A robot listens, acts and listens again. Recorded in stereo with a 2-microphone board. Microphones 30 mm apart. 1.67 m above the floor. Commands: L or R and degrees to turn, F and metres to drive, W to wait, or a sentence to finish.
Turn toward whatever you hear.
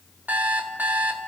R70
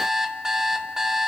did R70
R20
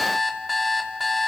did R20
Facing the alarm clock, 2 to 4 m away.